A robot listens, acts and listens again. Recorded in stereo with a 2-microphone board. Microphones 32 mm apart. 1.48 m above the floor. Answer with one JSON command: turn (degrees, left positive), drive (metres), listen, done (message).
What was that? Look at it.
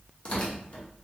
{"turn": 35}
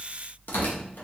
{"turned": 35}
{"turn": 105}
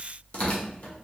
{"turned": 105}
{"turn": 45}
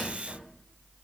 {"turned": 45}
{"turn": -30}
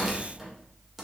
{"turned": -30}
{"turn": -10}
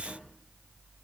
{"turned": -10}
{"listen": true}
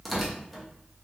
{"done": "Facing the tearing paper."}